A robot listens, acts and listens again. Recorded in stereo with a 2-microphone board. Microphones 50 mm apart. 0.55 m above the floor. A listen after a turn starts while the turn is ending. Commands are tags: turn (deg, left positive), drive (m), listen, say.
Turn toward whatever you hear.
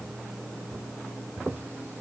<listen/>
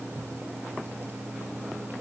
<listen/>
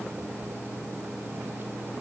<say>I can't make out anything.</say>